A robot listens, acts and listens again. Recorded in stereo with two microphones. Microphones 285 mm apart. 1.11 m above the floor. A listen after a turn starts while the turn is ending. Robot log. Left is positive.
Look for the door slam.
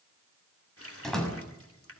cmd yaw +30
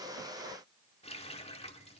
cmd idle
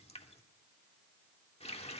end: I heard a door slam, but can't make it out now. It was about 30° right or 150° left.